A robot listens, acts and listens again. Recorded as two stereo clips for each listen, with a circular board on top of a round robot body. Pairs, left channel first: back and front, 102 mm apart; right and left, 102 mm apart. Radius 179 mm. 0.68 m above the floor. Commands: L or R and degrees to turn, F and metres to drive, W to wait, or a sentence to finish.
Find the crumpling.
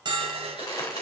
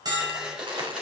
L130
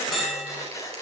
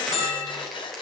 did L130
Facing the crumpling.